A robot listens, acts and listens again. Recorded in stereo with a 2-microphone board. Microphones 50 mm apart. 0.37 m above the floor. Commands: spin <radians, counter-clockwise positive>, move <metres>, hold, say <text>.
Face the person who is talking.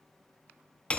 hold
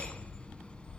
hold
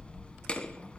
say I can't make out anyone speaking, only hammering.